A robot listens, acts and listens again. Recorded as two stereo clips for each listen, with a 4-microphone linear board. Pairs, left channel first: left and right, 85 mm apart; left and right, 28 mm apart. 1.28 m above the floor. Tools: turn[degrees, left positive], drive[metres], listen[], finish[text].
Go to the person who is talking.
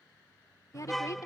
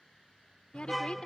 Thought: The woman speaking: about 40° left or 140° left.
Action: turn[40]
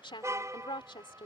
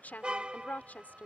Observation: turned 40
Thought: So it is at 100° left.
Action: turn[100]
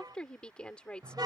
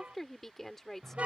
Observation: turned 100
Thought: The woman speaking is now 10° left.
Action: turn[10]
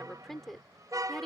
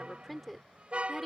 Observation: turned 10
Action: drive[1.0]
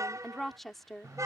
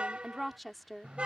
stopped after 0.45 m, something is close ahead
Action: finish[Blocked. The woman speaking is further on, straight ahead.]